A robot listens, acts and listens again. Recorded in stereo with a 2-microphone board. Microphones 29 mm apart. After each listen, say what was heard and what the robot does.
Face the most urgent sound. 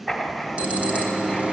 The alarm: about 45° right or 135° right. Turn 45° right.
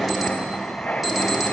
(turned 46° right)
Found it: an alarm, straight ahead.